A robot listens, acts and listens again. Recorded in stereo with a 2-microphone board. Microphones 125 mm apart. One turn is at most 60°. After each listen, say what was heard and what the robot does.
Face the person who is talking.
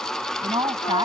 The woman speaking: about 35° right or 145° right. Turn 35° right.
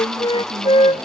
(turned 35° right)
Keep listening.
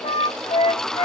Keep listening.
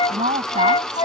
So it is at 110° right. Turn 60° right.
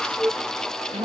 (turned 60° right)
The woman speaking is now 45° right. Turn 45° right.
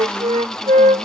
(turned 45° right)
Keep listening.
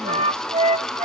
Keep listening.
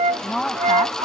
Facing the woman speaking.